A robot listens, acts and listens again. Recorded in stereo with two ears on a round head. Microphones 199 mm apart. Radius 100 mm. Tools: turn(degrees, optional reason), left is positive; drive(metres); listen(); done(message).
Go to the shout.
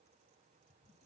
listen()
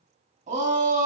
turn(degrees=-35, reason="The shout: about 35° right or 145° right.")
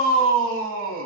turn(degrees=-110, reason="So it is at 110° right.")
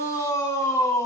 turn(degrees=15, reason="The shout is now 15° left.")
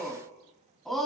drive(metres=1.0)
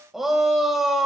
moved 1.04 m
drive(metres=1.0)
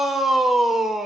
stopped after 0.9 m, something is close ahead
done("Arrived at the shout, straight ahead.")